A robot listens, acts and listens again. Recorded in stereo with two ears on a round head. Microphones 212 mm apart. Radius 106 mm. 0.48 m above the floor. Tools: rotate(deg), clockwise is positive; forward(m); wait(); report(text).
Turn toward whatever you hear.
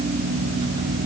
wait()
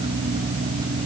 wait()
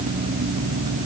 report("I can't make out anything.")